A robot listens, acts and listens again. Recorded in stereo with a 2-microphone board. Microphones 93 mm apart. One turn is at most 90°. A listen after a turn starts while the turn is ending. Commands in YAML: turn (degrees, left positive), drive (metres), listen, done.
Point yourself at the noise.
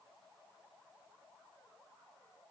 listen: true
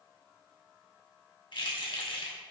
turn: 70
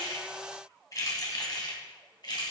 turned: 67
turn: 55
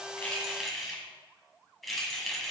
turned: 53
done: "Facing the keys jangling, 1 to 2 m away."